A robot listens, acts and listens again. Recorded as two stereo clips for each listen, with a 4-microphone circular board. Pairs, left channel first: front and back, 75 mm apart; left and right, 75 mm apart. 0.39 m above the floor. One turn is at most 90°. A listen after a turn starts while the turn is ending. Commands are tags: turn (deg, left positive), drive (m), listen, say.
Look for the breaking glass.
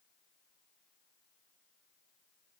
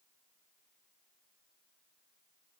<listen/>
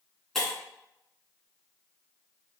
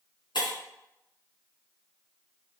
<turn deg="85"/>
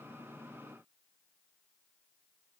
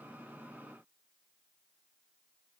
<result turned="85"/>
<say>I heard breaking glass from this way, but can't make it out now.</say>